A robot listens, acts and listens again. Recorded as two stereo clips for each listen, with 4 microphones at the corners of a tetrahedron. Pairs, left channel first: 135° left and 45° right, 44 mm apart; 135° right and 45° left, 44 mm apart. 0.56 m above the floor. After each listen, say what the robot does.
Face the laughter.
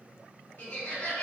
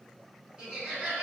Turn 115° left.
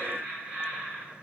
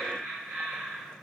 Turn 25° left.
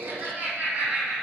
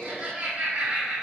Found it: laughter, straight ahead, 1 to 2 m away.